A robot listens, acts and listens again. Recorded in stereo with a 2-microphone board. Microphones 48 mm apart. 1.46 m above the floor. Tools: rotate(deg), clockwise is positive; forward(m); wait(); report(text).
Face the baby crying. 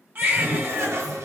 rotate(40)
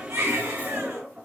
rotate(95)
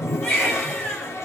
rotate(-25)
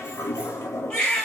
rotate(-20)
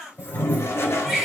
report("Found it: a baby crying, straight ahead, 1 to 2 m away.")